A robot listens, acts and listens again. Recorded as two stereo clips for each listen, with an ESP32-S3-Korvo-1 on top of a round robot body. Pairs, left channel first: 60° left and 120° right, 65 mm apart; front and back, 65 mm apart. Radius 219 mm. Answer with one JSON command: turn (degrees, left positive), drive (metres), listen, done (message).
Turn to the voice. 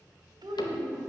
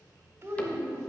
{"turn": -130}
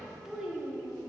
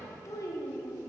{"turn": -35}
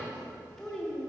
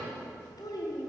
{"turn": -20}
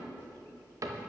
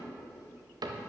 {"listen": true}
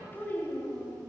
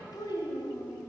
{"done": "Facing the child speaking."}